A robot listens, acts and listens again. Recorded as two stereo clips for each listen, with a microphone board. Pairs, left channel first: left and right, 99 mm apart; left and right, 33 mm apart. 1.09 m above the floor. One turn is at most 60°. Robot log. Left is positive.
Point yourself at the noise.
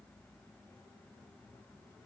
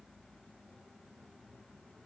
cmd idle
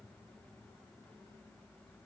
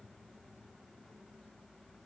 cmd idle
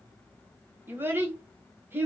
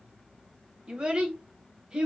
note: The child speaking: about 20° right or 160° right.
cmd yaw -20
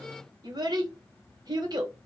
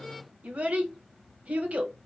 note: So it is at 140° right.
cmd yaw -60
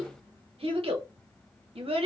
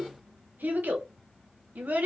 note: The child speaking is now 70° right.
cmd yaw -60
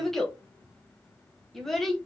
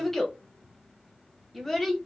end: Facing the child speaking.